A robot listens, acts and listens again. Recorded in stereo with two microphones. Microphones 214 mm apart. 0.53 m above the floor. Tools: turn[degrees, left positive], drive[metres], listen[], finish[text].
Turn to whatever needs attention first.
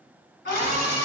Thought: The scream: about 45° left or 135° left.
Action: turn[45]
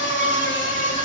Thought: So it is at 75° left.
Action: turn[75]
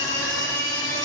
Thought: The scream is now 20° left.
Action: turn[20]
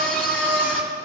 Action: finish[Facing the scream, 1 to 2 m away.]